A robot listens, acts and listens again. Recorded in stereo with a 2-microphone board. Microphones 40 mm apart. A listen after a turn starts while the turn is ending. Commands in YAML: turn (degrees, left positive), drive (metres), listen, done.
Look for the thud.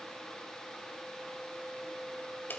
listen: true
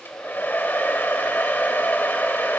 listen: true
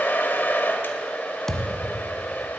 turn: 30
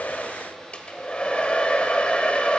listen: true
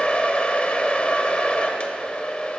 done: "I heard a thud, but can't make it out now. It was about 15° right or 135° left."